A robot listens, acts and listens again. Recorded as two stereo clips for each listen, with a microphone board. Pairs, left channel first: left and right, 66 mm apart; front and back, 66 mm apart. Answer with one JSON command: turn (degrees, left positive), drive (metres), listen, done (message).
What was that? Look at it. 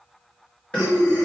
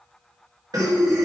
{"turn": 160}
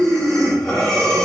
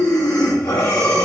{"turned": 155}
{"done": "Facing the breathing."}